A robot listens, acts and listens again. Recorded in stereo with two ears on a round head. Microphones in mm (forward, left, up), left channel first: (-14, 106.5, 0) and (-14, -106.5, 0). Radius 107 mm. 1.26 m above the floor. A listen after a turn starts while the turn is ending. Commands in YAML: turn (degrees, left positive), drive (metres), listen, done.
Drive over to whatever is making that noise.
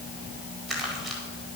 turn: 30
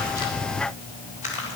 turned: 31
turn: 145
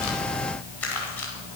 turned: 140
drive: 1.0
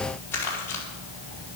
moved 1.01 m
turn: 10
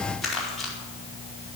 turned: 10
drive: 1.0
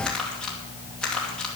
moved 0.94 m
drive: 1.0
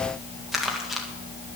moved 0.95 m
drive: 1.0
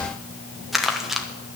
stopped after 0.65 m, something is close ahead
done: "Arrived at the crumpling, straight ahead."